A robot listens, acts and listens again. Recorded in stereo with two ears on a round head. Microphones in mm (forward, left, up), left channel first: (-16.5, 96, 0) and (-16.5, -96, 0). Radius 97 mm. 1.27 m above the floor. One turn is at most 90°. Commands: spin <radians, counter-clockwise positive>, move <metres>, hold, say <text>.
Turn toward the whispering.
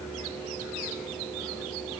hold
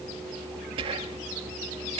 spin -0.44
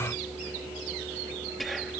say Found it: whispering, straight ahead.